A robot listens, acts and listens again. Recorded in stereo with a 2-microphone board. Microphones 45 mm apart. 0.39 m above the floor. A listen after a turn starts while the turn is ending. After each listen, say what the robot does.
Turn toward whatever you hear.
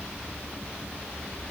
Keep listening.
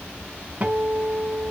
Turn 35° right.
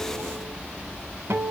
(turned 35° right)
Turn 110° right.
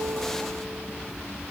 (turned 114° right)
Keep listening.
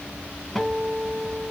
Facing the guitar, 1 to 2 m away.